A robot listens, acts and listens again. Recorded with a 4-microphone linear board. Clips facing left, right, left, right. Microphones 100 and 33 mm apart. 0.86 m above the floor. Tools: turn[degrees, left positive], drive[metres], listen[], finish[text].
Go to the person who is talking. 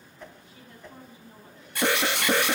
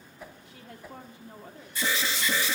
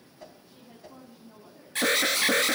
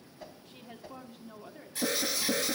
Thought: The woman speaking: about 75° right or 105° right.
Action: turn[-75]
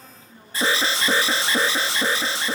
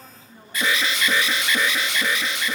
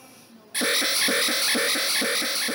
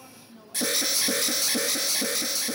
Thought: So it is at 20° right.
Action: turn[-20]
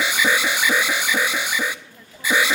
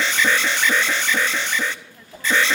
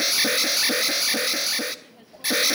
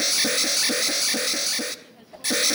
Action: drive[1.0]
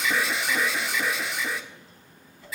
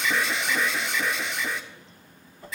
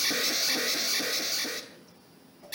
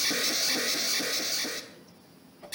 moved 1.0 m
Action: listen[]
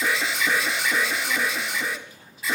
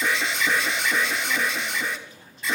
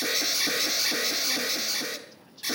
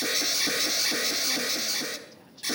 Action: listen[]
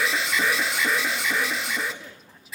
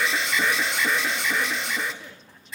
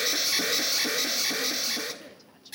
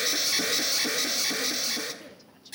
Action: finish[Facing where the woman speaking came from. I can't hear it now. I did not reach it.]